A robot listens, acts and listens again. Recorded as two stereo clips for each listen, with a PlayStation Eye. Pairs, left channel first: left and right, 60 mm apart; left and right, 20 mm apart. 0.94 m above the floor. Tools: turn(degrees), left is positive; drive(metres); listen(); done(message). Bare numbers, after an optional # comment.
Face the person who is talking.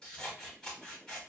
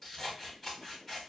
listen()
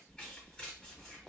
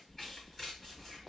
listen()
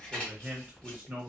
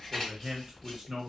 # The man speaking: about 35° right or 145° right.
turn(-35)
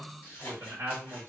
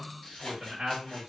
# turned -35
# So it is at 110° right.
turn(-110)
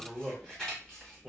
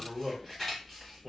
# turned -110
# The man speaking is now 15° left.
turn(15)
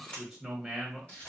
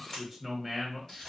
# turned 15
done("Facing the man speaking, under 1 m away.")